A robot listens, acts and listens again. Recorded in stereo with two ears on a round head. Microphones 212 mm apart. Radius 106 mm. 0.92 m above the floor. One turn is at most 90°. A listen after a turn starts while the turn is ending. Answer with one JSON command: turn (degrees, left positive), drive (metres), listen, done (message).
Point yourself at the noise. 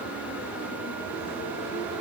{"listen": true}
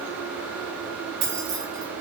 {"turn": -70}
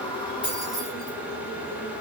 {"listen": true}
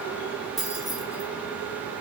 {"done": "Found it: keys jangling, straight ahead."}